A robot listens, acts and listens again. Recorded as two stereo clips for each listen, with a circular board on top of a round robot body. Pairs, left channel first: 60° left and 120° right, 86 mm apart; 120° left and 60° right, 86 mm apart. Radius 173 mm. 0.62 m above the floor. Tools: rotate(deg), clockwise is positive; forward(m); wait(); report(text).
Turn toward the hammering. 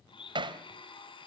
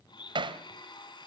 rotate(90)
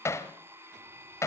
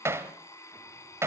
report("Found it: hammering, straight ahead.")